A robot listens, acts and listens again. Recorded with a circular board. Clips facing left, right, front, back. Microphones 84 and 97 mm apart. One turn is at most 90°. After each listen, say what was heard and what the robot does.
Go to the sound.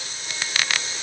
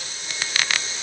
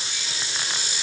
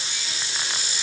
Keep listening.
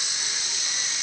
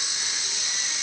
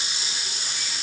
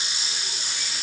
Keep listening.
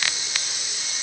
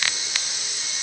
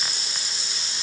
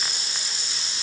I can't make out anything to turn to.